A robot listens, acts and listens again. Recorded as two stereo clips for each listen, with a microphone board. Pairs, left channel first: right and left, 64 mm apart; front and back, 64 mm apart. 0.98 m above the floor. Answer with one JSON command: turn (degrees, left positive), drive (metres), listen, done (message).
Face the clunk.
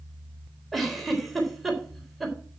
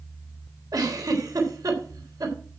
{"listen": true}
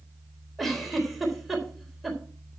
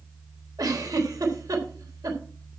{"listen": true}
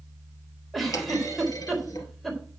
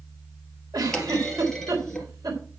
{"turn": -80}
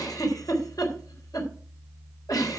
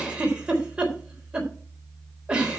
{"done": "Facing where the clunk came from. I can't hear it now."}